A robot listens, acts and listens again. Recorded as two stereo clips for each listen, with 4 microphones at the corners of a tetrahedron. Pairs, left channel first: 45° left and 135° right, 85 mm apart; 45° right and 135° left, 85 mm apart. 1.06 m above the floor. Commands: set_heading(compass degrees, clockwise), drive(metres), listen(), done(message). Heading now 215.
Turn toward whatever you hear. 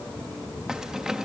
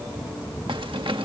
set_heading(70)
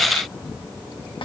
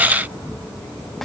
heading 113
set_heading(73)
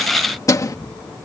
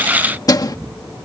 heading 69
done("Found it: keys jangling, straight ahead.")